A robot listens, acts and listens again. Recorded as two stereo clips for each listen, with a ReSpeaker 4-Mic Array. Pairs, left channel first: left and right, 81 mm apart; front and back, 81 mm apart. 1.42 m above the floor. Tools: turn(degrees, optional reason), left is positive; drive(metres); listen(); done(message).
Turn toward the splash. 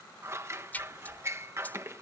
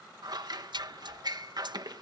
turn(degrees=160, reason="The splash: 160° left.")
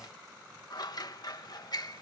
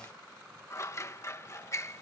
done("Facing where the splash came from. I can't hear it now.")